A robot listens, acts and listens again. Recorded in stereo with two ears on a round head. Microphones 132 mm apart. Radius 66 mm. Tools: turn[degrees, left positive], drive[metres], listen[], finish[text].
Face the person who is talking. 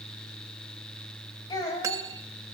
Thought: The child speaking: about 30° left or 150° left.
Action: turn[30]
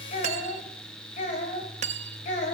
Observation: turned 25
Thought: So it is at 125° left.
Action: turn[125]
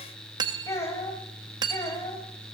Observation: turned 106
Thought: The child speaking is now 20° left.
Action: turn[20]
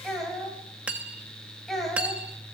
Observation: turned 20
Action: finish[Facing the child speaking.]